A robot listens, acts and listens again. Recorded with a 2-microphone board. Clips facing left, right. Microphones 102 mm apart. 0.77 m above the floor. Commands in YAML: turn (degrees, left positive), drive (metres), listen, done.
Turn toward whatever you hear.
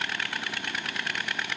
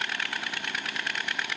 listen: true
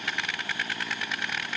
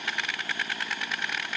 listen: true
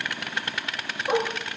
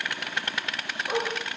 turn: 25
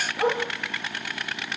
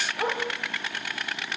done: "Facing the dog barking, over 4 m away."